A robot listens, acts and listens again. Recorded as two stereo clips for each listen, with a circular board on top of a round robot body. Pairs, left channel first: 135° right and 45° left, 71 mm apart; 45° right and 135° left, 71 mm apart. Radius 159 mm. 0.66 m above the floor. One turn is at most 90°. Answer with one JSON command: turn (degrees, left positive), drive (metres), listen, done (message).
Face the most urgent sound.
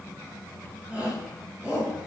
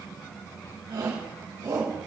{"turn": 90}
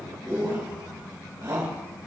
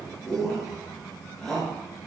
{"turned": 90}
{"turn": 35}
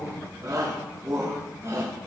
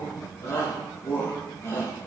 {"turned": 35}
{"done": "Facing the shout."}